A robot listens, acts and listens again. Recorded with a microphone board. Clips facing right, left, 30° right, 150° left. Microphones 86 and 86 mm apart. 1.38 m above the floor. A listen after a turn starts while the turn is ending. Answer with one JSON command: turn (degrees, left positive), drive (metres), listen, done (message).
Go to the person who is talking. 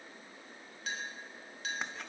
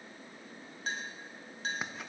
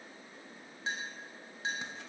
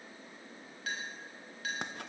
{"listen": true}
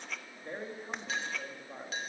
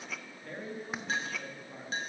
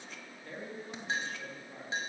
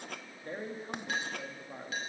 {"turn": -155}
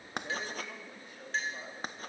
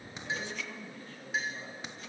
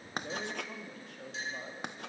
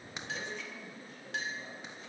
{"turn": -15}
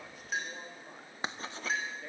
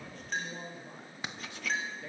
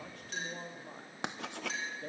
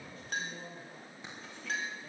{"drive": 1.0}
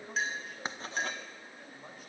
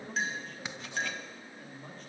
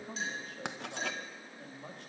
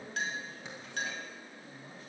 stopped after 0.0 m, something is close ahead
{"turn": -10}
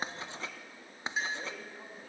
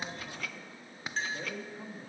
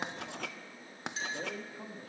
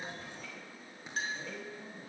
{"done": "Something is in my way. I am facing the man speaking but have not reached it."}